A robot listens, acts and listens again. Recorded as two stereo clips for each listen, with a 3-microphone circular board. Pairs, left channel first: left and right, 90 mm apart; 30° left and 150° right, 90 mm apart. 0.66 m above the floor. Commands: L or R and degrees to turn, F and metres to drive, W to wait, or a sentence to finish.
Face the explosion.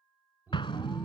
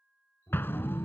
L90
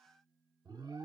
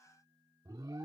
Facing where the explosion came from. I can't hear it now.